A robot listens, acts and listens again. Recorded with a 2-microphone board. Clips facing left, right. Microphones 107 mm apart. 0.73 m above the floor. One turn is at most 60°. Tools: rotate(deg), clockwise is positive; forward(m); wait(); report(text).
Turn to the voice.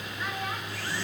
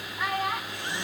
rotate(60)
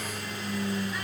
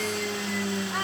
wait()
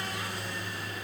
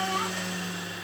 wait()
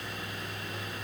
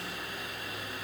report("I heard a child speaking, but can't make it out now. It was about 5° right or 55° right.")